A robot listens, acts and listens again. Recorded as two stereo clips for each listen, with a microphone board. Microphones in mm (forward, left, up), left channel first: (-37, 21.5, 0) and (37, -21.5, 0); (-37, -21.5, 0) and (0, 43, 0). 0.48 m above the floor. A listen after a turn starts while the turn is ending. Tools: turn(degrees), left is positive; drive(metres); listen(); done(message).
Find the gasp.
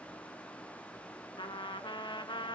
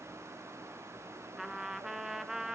listen()
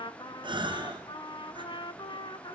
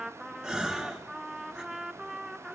turn(degrees=-20)
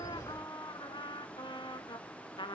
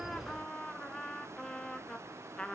done("I heard a gasp from this way, but can't make it out now.")